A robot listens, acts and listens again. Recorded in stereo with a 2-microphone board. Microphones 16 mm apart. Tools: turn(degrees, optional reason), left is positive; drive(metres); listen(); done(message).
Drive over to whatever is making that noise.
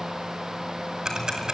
turn(degrees=-45, reason="The ticking: about 45° right or 135° right.")
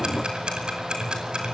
turn(degrees=-90, reason="So it is at 90° right.")
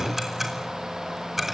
turn(degrees=-20, reason="The ticking is now 20° right.")
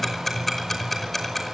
drive(metres=1.0)
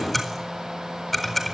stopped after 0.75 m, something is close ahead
done("Blocked. The ticking is further on, straight ahead.")